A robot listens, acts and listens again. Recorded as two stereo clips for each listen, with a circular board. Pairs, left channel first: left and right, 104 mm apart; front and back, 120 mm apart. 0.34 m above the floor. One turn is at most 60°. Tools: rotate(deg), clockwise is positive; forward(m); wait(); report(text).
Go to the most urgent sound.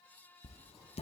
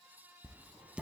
wait()
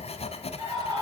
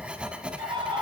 rotate(60)
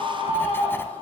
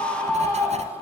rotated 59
rotate(60)
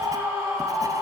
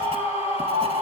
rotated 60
rotate(30)
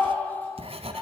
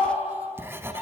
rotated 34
forward(1.0)
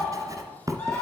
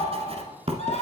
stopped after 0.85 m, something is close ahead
rotate(-10)
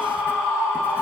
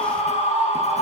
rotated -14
report("Something is in my way. I am facing the scream but have not reached it.")